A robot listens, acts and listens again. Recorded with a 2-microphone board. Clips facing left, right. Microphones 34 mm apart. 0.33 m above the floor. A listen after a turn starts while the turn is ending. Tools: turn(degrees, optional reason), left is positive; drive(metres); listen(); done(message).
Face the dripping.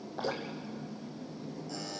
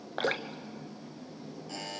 turn(degrees=-90)
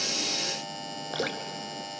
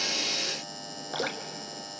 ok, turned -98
done("Facing the dripping, 1 to 2 m away.")